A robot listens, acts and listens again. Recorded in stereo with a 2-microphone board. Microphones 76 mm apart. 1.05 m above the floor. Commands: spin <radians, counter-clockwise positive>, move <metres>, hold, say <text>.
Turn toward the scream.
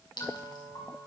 hold
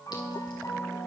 hold
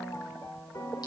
say I can't make out a scream, only a piano.